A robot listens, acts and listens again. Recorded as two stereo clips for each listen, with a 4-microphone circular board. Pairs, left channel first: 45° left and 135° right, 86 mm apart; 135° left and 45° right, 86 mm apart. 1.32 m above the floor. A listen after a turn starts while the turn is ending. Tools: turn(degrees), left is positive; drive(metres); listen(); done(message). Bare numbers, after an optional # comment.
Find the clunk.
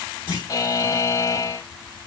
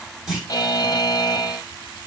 # The clunk: 130° right.
turn(-130)
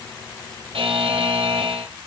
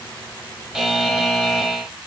done("Facing where the clunk came from. I can't hear it now.")